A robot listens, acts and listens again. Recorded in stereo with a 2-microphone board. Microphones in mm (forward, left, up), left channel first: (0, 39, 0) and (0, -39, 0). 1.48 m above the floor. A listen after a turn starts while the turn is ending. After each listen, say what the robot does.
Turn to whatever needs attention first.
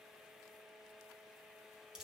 Keep listening.
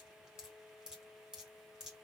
Keep listening.
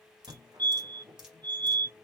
Turn 55° right.
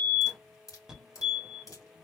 Turn 10° right.
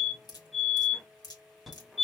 Found it: a fire alarm, straight ahead, 1 to 2 m away.